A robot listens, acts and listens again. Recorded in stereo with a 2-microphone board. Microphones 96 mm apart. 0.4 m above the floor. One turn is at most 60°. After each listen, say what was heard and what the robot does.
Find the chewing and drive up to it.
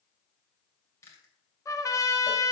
The chewing: about 30° left or 150° left. Turn 30° left.
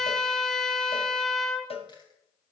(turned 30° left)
Keep listening.
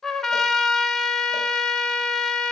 Keep listening.
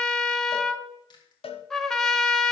So it is at 115° left. Turn 60° left.
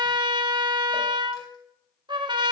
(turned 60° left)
Nothing new. It was at 55° left. Turn 55° left.
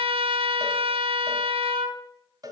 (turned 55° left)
Keep listening.
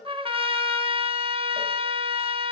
I heard chewing from this way, but can't make it out now. I did not reach it.